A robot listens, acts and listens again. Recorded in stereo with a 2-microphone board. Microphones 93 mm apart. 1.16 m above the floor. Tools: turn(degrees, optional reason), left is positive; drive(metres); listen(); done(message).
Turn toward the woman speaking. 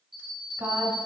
turn(degrees=-35, reason="The woman speaking: about 35° right or 145° right.")
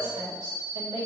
turn(degrees=-105, reason="So it is at 105° right.")
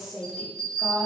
done("Facing the woman speaking.")